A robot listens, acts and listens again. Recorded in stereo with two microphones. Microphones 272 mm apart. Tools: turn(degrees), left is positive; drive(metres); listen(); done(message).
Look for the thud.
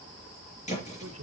turn(degrees=25)
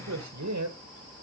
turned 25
listen()
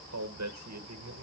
done("I heard a thud, but can't make it out now. It was about straight ahead or 130° left.")